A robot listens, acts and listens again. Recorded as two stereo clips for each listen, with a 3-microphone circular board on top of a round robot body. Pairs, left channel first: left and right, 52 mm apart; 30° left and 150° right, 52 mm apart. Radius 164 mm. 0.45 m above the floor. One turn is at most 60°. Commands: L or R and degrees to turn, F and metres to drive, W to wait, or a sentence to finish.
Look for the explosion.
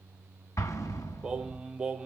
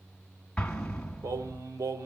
L60
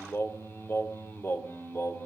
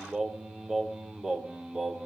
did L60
L45
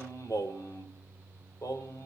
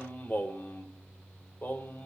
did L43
Facing where the explosion came from. I can't hear it now.